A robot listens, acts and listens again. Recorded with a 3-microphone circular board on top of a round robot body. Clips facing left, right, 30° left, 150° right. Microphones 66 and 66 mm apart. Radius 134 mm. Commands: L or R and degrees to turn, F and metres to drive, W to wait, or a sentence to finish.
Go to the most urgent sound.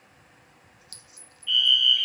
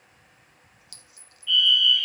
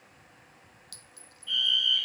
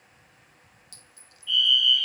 F1.0
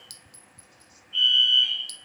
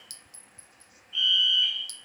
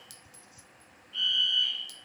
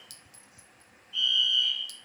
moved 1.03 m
F1.0
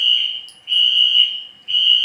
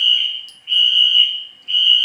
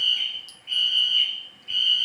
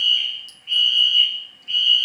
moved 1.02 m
F1.0
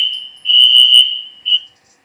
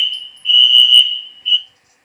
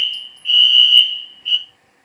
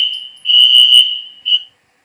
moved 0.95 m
R15
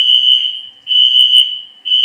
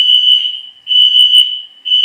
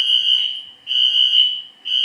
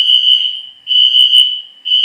F1.0
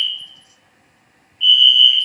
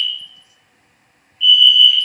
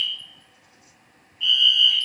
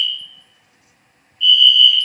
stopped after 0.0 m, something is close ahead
I am next to the fire alarm.